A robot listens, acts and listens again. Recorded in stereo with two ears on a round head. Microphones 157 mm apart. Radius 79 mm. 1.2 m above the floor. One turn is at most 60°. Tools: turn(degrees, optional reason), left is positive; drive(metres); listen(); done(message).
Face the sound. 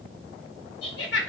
turn(degrees=60, reason="The laughter: about 70° left or 110° left.")
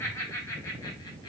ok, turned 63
turn(degrees=20, reason="So it is at 20° left.")
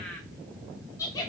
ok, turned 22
turn(degrees=20, reason="The laughter is now 20° left.")
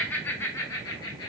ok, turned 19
turn(degrees=25, reason="The laughter is now 25° left.")
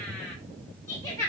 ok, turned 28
turn(degrees=20, reason="The laughter is now 20° left.")
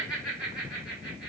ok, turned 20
done("Facing the laughter, 1 to 2 m away.")